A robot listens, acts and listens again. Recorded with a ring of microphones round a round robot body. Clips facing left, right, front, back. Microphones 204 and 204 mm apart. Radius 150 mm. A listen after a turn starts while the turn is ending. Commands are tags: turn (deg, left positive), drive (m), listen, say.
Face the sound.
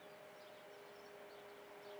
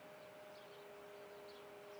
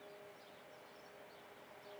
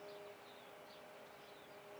<listen/>
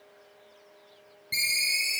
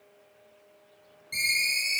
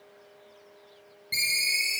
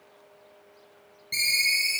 <turn deg="75"/>
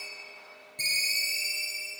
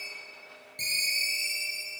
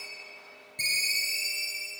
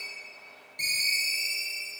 <turn deg="25"/>
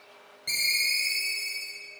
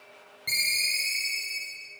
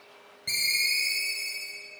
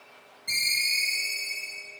<turn deg="-15"/>
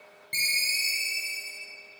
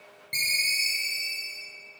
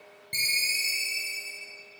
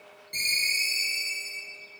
<say>Found it: a ringtone, straight ahead.</say>